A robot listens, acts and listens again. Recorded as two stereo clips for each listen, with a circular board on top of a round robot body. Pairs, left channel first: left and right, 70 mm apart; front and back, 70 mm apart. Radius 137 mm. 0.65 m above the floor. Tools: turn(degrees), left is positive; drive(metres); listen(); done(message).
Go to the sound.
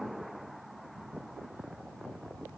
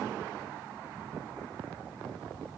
listen()
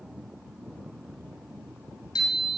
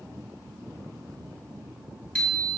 turn(degrees=75)
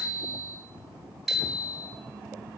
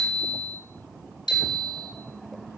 drive(metres=1.0)
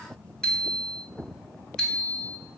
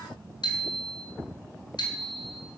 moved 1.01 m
turn(degrees=10)
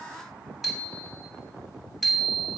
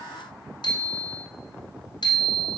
drive(metres=1.0)
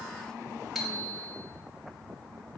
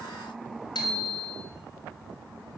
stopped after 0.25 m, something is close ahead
done("Something is in my way. I am facing the bicycle bell but have not reached it.")